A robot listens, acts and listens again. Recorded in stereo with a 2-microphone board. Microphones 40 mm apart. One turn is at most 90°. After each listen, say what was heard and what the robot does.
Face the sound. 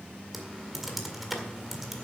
Turn 30° right.
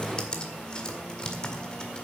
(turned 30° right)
So it is at 25° left. Turn 25° left.
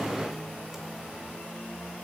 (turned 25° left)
Keep listening.
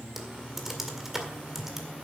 Facing the typing on a keyboard.